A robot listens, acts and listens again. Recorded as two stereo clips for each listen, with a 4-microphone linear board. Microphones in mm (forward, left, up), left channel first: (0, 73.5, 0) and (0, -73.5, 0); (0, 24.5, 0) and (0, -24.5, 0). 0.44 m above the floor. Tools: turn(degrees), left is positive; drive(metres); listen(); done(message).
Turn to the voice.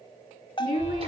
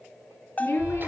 turn(degrees=75)
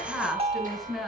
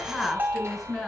done("Facing the woman speaking, over 4 m away.")